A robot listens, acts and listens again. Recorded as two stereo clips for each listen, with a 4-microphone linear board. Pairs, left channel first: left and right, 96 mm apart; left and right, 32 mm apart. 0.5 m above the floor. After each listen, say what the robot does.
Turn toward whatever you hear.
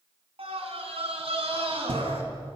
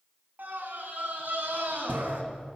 Turn 70° right.
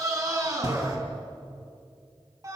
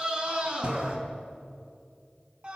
Turn 35° right.
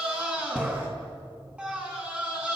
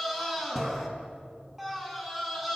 Turn 10° right.
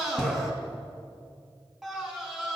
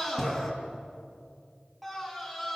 Facing the scream, over 4 m away.